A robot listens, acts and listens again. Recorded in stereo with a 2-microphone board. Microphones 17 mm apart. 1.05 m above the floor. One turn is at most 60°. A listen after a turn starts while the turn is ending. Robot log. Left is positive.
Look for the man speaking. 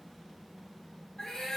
cmd idle
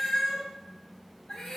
cmd idle
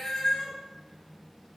end: I can't make out a man speaking, only a cat meowing.